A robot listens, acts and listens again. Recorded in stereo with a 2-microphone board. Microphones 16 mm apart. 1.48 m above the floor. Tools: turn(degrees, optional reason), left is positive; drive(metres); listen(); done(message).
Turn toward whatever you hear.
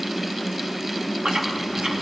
turn(degrees=-65, reason="The chewing: about 65° right or 115° right.")
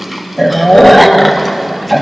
done("Found it: chewing, straight ahead.")